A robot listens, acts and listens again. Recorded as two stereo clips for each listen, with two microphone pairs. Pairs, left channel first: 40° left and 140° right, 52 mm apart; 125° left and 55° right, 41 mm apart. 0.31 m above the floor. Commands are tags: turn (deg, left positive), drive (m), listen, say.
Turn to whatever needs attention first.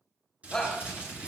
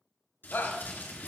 <turn deg="120"/>
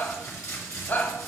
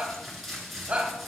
<say>Found it: a shout, straight ahead.</say>